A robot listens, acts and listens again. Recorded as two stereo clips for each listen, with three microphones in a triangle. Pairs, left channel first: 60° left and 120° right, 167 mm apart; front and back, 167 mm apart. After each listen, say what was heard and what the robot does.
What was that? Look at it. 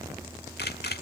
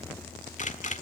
The camera shutter: 45° left. Turn 45° left.
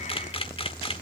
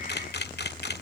Found it: a camera shutter, straight ahead.